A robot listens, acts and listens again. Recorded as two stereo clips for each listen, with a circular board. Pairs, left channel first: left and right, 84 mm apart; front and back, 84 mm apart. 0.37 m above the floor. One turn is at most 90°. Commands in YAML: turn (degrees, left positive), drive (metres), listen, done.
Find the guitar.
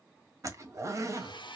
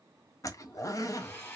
listen: true
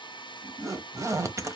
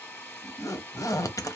listen: true
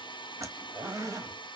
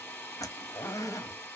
done: "I can't make out a guitar, only a hair dryer and a zipper."